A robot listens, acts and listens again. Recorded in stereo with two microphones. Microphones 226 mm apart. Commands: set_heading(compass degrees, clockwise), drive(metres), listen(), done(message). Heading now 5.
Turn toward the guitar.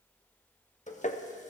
listen()
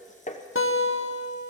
set_heading(295)
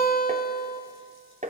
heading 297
set_heading(257)
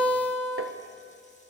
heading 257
done("Facing the guitar.")